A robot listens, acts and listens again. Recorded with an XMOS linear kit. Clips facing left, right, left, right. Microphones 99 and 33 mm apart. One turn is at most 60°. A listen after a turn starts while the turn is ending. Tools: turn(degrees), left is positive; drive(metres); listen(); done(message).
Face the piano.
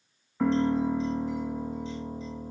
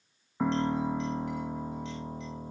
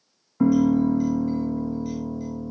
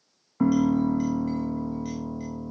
turn(degrees=-15)
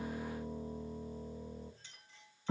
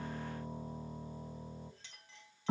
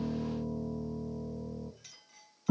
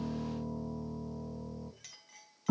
turn(degrees=-60)
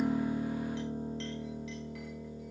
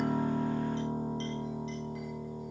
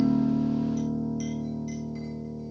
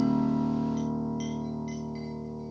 turn(degrees=-60)
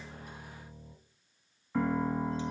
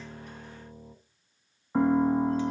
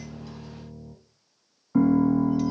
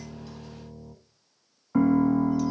turn(degrees=-30)
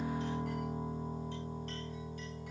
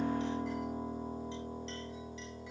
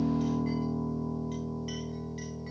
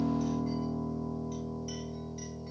done("Found it: a piano, straight ahead, 1 to 2 m away.")